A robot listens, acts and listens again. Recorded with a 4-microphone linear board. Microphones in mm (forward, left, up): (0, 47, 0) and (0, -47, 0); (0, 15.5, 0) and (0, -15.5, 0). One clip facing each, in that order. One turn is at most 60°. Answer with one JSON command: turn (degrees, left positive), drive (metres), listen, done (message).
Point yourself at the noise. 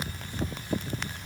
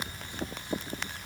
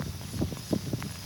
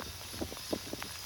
{"listen": true}
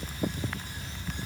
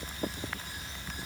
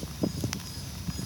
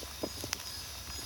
{"listen": true}
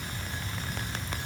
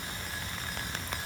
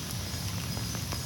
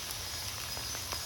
{"done": "I can't make out anything to turn to."}